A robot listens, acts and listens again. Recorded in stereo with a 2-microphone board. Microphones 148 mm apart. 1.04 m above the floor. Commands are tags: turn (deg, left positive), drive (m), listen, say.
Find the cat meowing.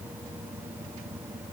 <listen/>
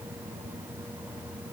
<listen/>
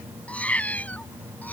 <turn deg="30"/>
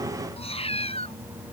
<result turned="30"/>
<turn deg="135"/>
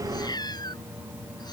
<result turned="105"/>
<turn deg="30"/>
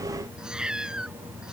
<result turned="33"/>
<say>Facing the cat meowing.</say>